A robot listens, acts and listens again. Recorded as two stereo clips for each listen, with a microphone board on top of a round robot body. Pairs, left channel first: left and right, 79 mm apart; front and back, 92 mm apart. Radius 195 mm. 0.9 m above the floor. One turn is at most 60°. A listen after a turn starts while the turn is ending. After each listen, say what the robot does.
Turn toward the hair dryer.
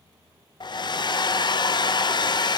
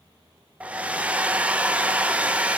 Turn 60° left.
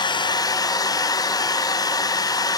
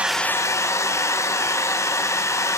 Turn 55° left.
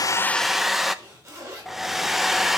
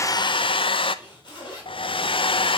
Facing the hair dryer, under 1 m away.